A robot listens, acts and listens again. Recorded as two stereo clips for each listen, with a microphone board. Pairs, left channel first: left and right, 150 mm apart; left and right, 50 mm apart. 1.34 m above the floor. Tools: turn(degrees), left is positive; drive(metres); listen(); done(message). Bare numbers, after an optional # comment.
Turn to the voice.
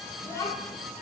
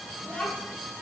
# The child speaking: about 20° left or 160° left.
turn(20)
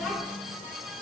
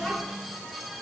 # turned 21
done("Found it: a child speaking, straight ahead.")